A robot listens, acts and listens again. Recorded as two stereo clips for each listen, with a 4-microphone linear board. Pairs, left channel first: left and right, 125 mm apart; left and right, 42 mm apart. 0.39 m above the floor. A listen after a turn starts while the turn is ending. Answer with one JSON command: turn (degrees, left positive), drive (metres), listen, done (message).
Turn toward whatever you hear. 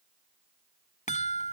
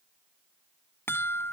{"turn": 70}
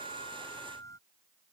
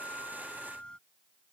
{"turn": 25}
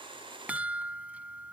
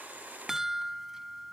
{"turn": -10}
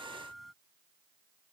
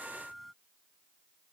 {"done": "Facing the chime."}